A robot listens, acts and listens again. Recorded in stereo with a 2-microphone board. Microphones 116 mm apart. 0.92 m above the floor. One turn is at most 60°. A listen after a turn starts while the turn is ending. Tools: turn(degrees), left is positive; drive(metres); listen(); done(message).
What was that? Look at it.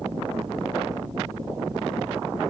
listen()
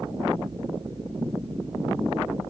listen()
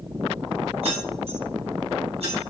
turn(degrees=-60)
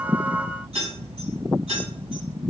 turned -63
turn(degrees=-55)
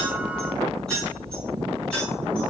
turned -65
turn(degrees=10)
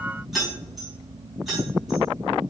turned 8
done("Found it: keys jangling, straight ahead, over 4 m away.")